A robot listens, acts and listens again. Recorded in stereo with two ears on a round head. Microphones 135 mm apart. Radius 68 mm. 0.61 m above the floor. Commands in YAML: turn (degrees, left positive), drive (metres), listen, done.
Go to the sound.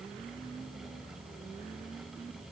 listen: true
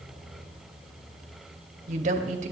turn: -55
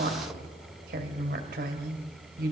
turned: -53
turn: -70
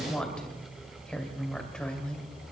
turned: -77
drive: 1.0
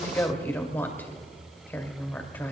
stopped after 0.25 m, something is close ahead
turn: 15
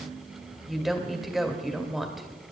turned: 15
done: "Blocked. The woman speaking is further on, straight ahead."